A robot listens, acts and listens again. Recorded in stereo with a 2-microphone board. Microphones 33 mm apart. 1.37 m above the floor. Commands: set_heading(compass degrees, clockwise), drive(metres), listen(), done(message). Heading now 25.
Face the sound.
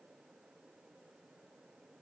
listen()
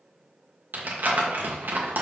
set_heading(100)
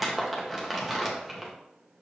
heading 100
done("Facing the crumpling.")